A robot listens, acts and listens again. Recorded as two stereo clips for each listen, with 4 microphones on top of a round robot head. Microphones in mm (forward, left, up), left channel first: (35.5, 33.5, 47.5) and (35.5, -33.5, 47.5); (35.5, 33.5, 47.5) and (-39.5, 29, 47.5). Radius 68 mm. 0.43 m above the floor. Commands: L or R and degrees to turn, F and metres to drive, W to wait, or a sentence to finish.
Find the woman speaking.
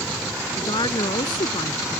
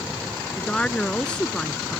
L80
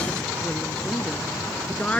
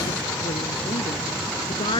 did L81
L15
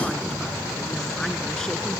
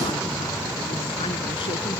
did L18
W
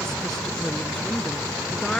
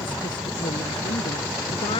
Facing the woman speaking.